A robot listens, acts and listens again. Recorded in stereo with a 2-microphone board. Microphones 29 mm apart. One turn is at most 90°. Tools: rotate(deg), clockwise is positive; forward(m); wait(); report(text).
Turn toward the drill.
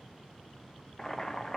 wait()
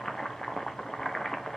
wait()
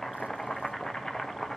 report("I can't make out a drill to turn to.")